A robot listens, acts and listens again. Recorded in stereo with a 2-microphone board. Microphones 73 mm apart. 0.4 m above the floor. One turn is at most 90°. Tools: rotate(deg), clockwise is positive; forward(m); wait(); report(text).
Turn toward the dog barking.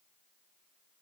wait()
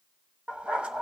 rotate(15)
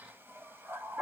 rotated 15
rotate(90)
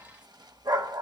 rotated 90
rotate(80)
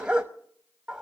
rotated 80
rotate(15)
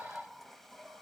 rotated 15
report("Facing the dog barking, 1 to 2 m away.")